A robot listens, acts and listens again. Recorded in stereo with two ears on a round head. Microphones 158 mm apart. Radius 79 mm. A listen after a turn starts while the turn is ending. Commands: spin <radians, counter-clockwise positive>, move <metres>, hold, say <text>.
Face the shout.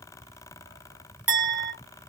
hold
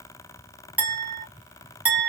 hold
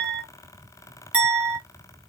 say I can't make out a shout, only a clink.